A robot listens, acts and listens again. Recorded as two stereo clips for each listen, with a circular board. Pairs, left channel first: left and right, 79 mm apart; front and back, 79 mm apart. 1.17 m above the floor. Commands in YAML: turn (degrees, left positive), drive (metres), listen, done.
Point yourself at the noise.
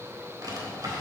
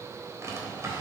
turn: -125
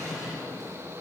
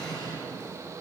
done: "Facing the drawer, 2 to 4 m away."